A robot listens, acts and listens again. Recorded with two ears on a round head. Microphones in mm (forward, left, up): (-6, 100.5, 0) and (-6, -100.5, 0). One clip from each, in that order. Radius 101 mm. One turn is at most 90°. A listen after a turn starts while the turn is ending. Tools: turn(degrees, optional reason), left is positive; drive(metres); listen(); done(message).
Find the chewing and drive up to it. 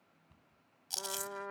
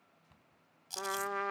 turn(degrees=20, reason="The chewing: about 20° left or 160° left.")
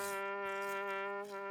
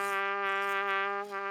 listen()
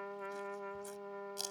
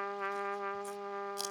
drive(metres=1.0)
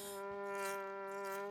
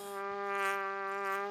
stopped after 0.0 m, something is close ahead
listen()
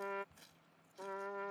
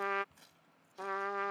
listen()
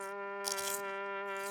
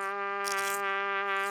done("Facing where the chewing came from. I can't hear it now. I did not reach it.")